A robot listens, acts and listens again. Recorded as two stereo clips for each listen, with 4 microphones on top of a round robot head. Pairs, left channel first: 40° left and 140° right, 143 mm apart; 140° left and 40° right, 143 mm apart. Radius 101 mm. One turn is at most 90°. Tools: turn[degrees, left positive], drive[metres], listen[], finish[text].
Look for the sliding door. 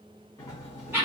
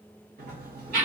Thought: The sliding door: 30° right.
Action: turn[-30]
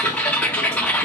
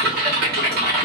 Action: listen[]
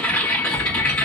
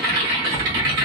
Action: listen[]
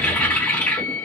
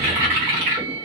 Action: finish[I heard a sliding door from this way, but can't make it out now.]